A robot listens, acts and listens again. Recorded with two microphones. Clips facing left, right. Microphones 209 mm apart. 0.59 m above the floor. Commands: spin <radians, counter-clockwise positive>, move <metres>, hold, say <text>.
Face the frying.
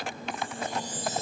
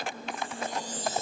hold
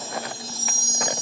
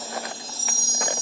hold
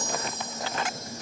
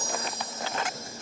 say I can't make out frying, only a chime.